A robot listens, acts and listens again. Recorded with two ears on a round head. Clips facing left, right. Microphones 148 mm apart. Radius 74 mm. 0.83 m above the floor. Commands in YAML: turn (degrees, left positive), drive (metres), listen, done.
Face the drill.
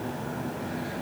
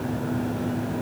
listen: true
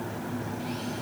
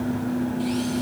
listen: true
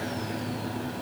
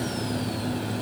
done: "I can't make out a drill to turn to."